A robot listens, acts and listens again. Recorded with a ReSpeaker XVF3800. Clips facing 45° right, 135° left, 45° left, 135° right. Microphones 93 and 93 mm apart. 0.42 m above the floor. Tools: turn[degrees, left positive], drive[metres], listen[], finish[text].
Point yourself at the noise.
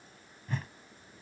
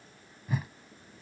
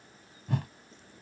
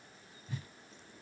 Thought: The whoosh: 50° left.
Action: turn[50]
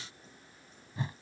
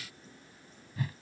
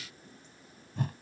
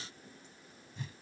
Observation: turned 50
Thought: The whoosh is now 20° left.
Action: turn[20]
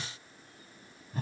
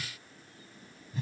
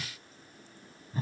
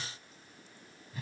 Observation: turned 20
Action: finish[Facing the whoosh.]